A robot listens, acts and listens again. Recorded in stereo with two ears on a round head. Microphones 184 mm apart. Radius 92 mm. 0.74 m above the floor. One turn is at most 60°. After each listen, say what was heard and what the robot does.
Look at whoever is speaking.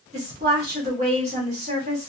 The woman speaking: about 35° right or 145° right. Turn 35° right.
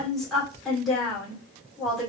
Found it: a woman speaking, straight ahead.